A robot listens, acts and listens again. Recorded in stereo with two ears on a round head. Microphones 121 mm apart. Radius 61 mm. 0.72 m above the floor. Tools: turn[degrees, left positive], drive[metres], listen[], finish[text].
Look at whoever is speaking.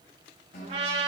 Action: listen[]
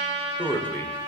Action: turn[30]
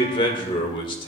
Thought: So it is at 140° left.
Action: turn[140]
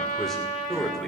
Action: finish[Facing the man speaking, 2 to 4 m away.]